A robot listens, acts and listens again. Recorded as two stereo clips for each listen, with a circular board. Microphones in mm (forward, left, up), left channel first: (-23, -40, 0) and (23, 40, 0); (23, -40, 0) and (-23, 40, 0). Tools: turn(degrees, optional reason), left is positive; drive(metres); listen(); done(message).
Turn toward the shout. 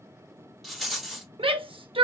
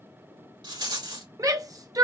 turn(degrees=70, reason="The shout: 70° left.")
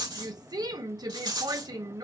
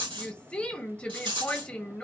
turn(degrees=20, reason="The shout is now 20° left.")
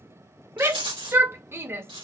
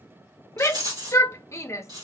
done("Facing the shout.")